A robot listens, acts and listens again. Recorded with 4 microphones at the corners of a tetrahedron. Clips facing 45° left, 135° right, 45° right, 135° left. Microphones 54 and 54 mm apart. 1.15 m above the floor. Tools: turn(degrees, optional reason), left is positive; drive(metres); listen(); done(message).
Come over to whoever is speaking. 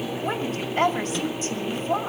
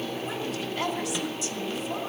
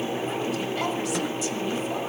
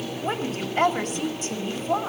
turn(degrees=95, reason="The woman speaking: 95° left.")
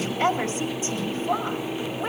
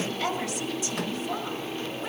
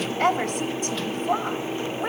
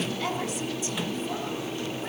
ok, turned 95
turn(degrees=-10, reason="The woman speaking is now 10° right.")
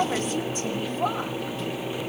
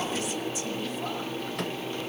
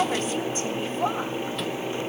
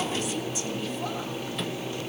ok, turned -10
drive(metres=1.0)
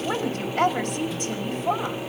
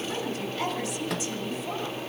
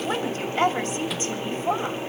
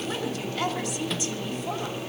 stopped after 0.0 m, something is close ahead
turn(degrees=10, reason="The woman speaking is now 10° left.")
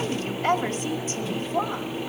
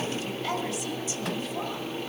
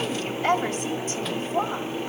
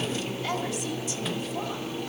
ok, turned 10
done("Blocked. The woman speaking is further on, straight ahead.")